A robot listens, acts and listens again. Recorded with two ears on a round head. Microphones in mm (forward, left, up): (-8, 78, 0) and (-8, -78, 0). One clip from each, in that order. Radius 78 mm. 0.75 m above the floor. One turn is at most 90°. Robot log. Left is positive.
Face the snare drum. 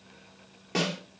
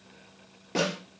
note: The snare drum: about 20° left or 160° left.
cmd yaw +20
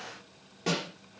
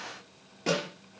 end: Found it: a snare drum, straight ahead.